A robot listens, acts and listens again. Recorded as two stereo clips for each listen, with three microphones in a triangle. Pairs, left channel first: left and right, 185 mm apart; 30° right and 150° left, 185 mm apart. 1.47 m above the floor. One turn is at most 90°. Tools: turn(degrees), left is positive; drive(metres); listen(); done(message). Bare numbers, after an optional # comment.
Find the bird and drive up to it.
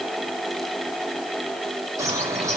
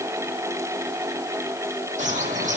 # The bird: 165° right.
turn(-90)
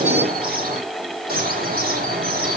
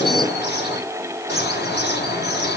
# The bird is now 55° right.
turn(-55)
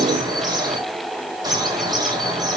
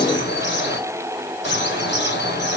# The bird is now 20° right.
turn(-20)
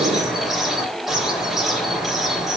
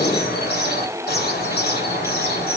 drive(1.0)
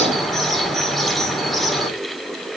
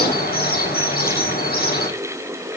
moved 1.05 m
drive(1.0)
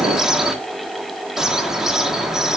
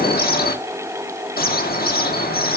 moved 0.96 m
drive(1.0)
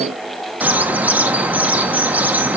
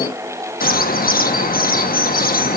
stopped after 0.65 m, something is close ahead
# The bird is now 10° right.
turn(-10)
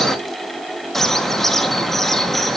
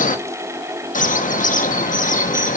done("I am next to the bird.")